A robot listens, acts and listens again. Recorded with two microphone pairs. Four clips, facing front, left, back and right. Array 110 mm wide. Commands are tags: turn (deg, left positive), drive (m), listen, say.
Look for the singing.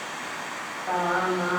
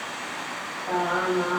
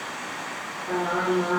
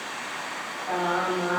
<say>Found it: singing, straight ahead.</say>